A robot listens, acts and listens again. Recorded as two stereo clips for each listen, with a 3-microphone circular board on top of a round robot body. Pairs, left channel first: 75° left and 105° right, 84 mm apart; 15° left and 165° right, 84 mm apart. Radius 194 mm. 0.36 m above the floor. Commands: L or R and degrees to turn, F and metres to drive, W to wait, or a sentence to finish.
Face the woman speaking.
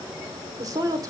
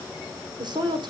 R145
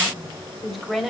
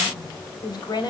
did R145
R15
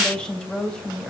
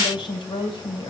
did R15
Facing the woman speaking.